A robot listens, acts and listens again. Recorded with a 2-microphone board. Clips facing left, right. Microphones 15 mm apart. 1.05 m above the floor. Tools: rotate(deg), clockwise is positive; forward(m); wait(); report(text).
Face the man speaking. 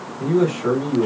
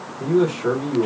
rotate(-30)
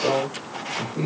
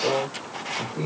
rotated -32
rotate(-135)
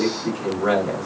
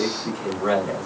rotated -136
report("Facing the man speaking, 2 to 4 m away.")